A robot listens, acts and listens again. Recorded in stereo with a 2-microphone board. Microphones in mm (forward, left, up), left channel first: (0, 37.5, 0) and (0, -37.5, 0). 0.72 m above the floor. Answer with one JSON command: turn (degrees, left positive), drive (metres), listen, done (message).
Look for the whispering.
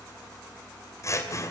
{"listen": true}
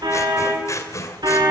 {"listen": true}
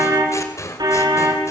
{"done": "I can't make out whispering to turn to."}